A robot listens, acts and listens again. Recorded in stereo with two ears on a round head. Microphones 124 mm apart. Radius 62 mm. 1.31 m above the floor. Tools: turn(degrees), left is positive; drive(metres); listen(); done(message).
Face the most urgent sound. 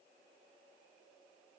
listen()
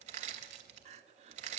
turn(degrees=-50)
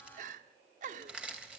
turn(degrees=-70)
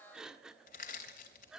done("Facing the crying.")